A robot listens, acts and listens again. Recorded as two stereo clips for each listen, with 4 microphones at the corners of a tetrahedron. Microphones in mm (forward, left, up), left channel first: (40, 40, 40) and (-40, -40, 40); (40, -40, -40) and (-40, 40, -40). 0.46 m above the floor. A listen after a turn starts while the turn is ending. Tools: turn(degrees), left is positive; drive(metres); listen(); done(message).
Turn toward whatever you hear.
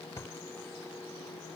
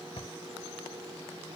turn(degrees=-20)
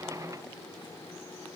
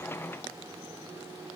listen()
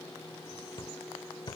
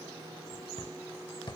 done("Found it: a drawer, straight ahead.")